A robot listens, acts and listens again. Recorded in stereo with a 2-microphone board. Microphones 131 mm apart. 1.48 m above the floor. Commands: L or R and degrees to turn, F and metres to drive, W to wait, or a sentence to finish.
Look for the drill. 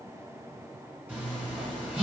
W
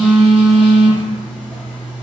W
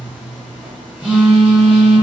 I can't make out a drill to turn to.